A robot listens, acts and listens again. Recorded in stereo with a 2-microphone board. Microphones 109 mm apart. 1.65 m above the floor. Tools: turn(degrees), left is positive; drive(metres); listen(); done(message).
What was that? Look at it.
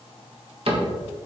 turn(degrees=-65)
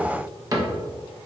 turn(degrees=-35)
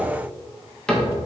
turn(degrees=10)
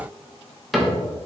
done("Facing the cupboard door.")